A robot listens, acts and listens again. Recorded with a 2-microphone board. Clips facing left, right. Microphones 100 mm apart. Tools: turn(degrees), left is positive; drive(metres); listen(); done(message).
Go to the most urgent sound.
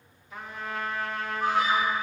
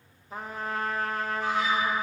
turn(degrees=60)
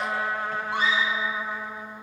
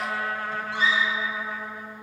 turn(degrees=60)
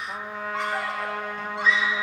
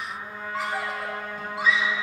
drive(metres=1.0)
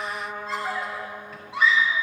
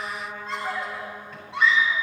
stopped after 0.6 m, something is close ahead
done("Something is in my way. I am facing the scream but have not reached it.")